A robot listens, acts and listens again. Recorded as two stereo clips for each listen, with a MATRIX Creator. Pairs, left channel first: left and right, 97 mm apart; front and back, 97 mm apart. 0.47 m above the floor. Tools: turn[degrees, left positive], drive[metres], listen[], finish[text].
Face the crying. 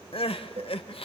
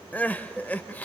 Thought: The crying: 75° left.
Action: turn[75]
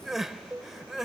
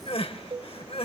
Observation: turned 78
Action: finish[Found it: crying, straight ahead, under 1 m away.]